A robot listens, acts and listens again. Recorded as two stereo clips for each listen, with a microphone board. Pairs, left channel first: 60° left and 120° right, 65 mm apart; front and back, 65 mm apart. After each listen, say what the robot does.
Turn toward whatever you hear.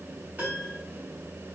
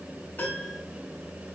Turn 60° right.
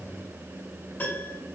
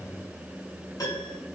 Found it: a piano, straight ahead, 2 to 4 m away.